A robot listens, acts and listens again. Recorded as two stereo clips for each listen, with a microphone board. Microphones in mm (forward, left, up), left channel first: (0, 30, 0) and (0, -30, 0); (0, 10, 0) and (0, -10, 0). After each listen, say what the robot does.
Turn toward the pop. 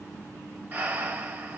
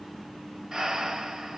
Keep listening.
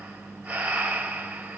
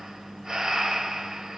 Keep listening.
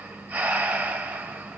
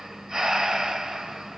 I can't make out a pop to turn to.